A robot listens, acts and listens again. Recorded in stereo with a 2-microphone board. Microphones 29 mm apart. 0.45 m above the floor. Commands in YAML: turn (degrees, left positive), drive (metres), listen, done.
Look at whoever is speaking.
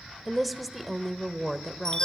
turn: 30
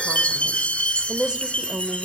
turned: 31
turn: -30
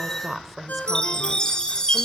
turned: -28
done: "Facing the woman speaking, 1 to 2 m away."